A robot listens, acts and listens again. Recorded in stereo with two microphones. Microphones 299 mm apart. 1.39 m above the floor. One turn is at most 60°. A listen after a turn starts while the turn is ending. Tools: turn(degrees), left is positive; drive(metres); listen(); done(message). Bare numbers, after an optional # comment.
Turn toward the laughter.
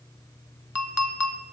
listen()
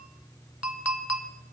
listen()
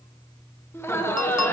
turn(30)
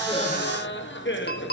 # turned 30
# So it is at 140° left.
turn(60)
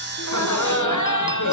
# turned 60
# The laughter is now 90° left.
turn(60)
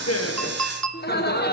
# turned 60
# The laughter is now 35° left.
turn(35)
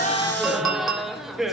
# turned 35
done("Facing the laughter, 1 to 2 m away.")